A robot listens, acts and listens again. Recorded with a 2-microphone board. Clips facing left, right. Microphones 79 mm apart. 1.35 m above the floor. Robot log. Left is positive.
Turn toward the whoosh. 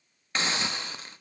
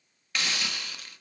cmd idle
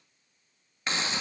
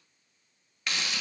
cmd idle
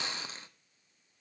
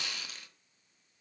end: I can't make out a whoosh, only a hiss.